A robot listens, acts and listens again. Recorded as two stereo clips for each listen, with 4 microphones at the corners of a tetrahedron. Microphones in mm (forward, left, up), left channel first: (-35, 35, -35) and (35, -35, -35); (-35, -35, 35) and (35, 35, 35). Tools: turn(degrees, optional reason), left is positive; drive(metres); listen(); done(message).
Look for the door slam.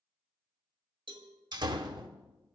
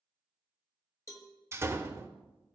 turn(degrees=-15, reason="The door slam: 15° right.")
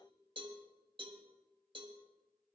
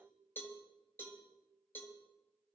done("I heard a door slam from this way, but can't make it out now.")